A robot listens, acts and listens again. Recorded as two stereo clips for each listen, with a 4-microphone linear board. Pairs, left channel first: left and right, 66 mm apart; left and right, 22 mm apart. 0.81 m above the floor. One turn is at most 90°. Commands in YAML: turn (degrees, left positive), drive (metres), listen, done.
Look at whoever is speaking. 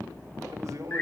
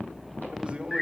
turn: -50
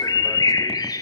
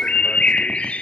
listen: true
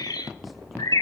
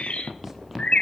listen: true
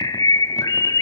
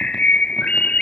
done: "I heard a man speaking, but can't make it out now. It was about straight ahead or 80° right."